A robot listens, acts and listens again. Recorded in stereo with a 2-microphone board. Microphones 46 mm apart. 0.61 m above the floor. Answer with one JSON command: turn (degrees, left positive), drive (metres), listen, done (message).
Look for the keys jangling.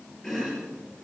{"listen": true}
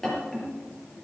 {"listen": true}
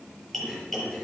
{"done": "I can't make out keys jangling, only chopping."}